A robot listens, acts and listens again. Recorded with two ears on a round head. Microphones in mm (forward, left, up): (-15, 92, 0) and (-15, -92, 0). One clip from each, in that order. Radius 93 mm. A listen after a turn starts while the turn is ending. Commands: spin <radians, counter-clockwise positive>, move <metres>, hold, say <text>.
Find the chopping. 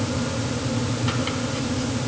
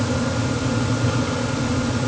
hold
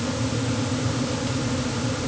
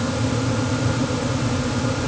hold
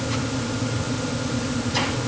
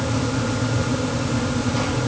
say I can't make out chopping.